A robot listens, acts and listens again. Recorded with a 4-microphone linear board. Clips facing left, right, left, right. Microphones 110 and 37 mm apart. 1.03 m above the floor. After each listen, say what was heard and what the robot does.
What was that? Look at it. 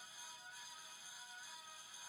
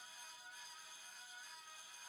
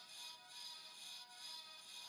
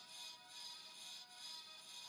Keep listening.
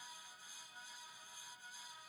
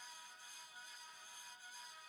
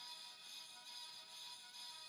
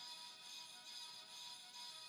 Keep listening.
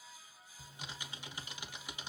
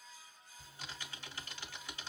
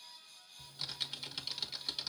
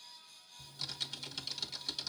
The typing on a keyboard: about 15° left or 165° left. Turn 15° left.
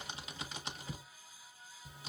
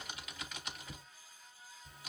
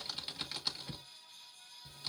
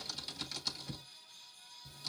So it is at 150° left. Turn 150° left.
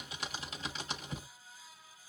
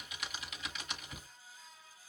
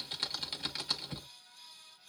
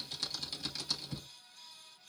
The typing on a keyboard is now 40° left. Turn 40° left.
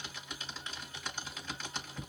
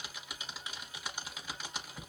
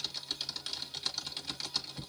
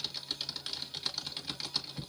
The typing on a keyboard is now 15° right. Turn 15° right.
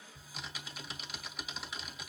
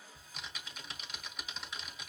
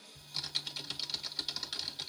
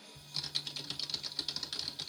Found it: typing on a keyboard, straight ahead.